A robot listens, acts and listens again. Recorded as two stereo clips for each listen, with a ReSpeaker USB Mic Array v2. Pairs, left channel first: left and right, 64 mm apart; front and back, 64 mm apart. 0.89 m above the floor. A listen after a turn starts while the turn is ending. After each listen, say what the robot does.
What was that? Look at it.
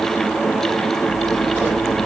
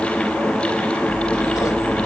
Turn 30° right.
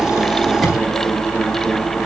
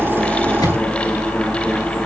Found it: scissors, straight ahead, over 4 m away.